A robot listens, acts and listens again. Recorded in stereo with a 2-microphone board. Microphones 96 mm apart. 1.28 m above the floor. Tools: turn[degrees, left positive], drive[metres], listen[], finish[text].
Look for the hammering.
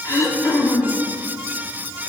Action: listen[]
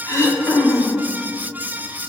Action: listen[]
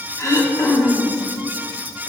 Action: finish[I can't make out hammering to turn to.]